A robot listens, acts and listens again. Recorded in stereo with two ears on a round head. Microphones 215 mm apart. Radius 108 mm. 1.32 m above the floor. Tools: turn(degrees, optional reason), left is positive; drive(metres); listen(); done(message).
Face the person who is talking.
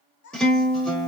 turn(degrees=45, reason="The child speaking: about 45° left or 135° left.")
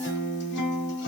listen()
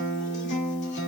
listen()
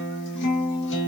done("I heard a child speaking, but can't make it out now. It was about straight ahead or 90° left.")